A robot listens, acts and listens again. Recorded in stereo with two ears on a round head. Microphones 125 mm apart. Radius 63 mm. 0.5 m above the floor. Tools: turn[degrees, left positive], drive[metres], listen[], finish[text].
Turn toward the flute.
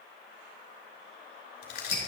Action: listen[]
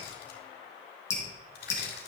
Action: listen[]
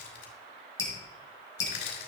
Action: finish[I can't make out a flute, only crushing and dripping.]